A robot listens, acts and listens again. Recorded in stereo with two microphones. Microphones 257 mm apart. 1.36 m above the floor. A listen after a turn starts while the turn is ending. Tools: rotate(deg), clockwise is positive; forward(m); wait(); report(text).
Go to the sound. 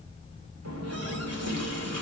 rotate(75)
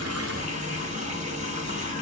rotate(30)
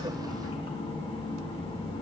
rotate(-20)
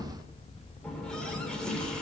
forward(1.0)
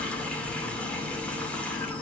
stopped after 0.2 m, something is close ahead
report("Something is in my way. I am facing the running tap but have not reached it.")